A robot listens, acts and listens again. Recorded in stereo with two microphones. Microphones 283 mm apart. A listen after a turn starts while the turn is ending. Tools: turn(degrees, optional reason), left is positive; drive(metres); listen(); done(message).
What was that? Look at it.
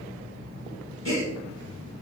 turn(degrees=60, reason="The gasp: about 60° left or 120° left.")
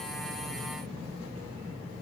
listen()
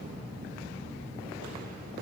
done("I heard a gasp, but can't make it out now. It was about straight ahead or 60° left.")